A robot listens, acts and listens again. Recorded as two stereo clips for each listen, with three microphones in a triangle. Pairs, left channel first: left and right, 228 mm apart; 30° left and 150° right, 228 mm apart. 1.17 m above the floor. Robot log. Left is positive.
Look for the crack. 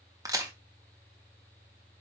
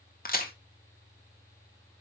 note: The crack: 15° right.
cmd yaw -15
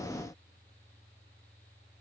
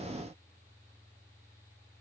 end: I heard a crack from this way, but can't make it out now.